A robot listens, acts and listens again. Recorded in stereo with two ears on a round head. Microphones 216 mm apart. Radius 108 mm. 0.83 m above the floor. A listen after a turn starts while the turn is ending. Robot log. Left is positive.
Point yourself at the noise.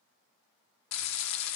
cmd yaw +90
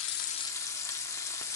note: So it is at 15° left.
cmd yaw +15
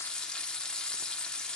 end: Found it: frying, straight ahead, under 1 m away.